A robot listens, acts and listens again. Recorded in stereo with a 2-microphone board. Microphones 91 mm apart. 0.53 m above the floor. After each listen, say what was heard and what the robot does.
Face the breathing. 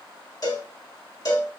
Keep listening.
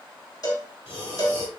Turn 90° left.
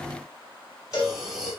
Facing the breathing, 1 to 2 m away.